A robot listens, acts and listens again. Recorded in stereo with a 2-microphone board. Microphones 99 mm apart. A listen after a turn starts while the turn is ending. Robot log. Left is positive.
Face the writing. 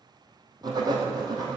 note: The writing: about 45° right or 135° right.
cmd yaw -45
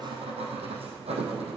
note: So it is at 90° right.
cmd yaw -90
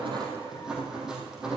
end: Facing the writing, 2 to 4 m away.